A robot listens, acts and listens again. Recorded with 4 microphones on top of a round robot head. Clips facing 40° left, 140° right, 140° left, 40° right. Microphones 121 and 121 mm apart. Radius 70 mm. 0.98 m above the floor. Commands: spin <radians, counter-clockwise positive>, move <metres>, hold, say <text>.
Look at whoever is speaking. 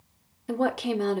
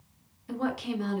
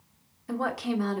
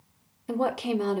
spin 0.35
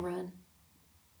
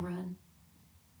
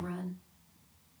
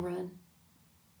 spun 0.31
say Facing the woman speaking, 1 to 2 m away.